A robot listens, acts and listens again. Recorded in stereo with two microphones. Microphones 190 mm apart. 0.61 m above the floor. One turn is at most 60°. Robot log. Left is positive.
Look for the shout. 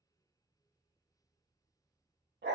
cmd idle
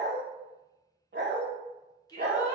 note: The shout: about 20° left or 160° left.
cmd yaw +20
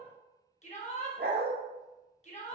note: So it is at 140° left.
cmd yaw +60
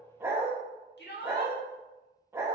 note: The shout is now 90° left.
cmd yaw +60
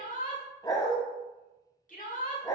note: The shout is now 50° left.
cmd yaw +50
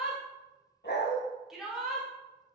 end: Found it: a shout, straight ahead, 1 to 2 m away.